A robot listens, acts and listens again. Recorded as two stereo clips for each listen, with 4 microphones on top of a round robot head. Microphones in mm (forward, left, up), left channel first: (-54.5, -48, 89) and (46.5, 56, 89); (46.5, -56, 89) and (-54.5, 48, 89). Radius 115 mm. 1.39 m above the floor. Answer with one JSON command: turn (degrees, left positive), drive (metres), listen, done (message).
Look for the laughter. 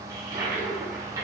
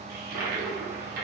{"listen": true}
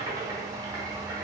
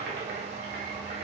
{"listen": true}
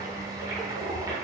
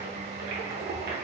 {"done": "I can't make out laughter to turn to."}